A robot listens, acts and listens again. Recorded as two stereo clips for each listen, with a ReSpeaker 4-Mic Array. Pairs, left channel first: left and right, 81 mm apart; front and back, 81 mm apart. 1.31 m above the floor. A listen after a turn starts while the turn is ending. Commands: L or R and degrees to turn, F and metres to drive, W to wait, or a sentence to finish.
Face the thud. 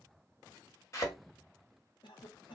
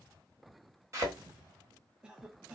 L130
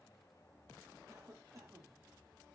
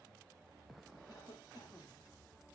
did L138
I heard a thud from this way, but can't make it out now.